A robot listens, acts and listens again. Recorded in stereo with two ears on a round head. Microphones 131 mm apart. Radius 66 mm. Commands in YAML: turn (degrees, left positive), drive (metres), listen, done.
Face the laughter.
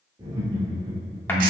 turn: -15
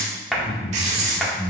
turn: 30
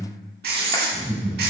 turn: -15
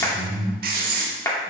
done: "Found it: laughter, straight ahead, over 4 m away."